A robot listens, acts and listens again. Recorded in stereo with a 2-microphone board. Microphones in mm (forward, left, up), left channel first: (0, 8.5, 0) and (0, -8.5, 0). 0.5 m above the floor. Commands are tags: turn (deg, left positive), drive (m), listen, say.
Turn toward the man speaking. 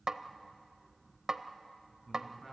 <turn deg="20"/>
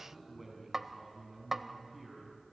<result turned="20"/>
<say>Facing the man speaking, over 4 m away.</say>